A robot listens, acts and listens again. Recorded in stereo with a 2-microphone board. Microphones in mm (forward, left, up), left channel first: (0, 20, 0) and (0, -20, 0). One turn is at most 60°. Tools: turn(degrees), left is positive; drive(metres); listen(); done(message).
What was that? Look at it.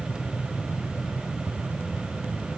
listen()
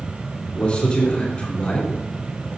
turn(degrees=30)
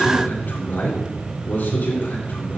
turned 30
turn(degrees=60)
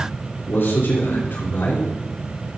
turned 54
turn(degrees=60)
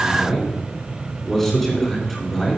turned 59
done("Facing the man speaking.")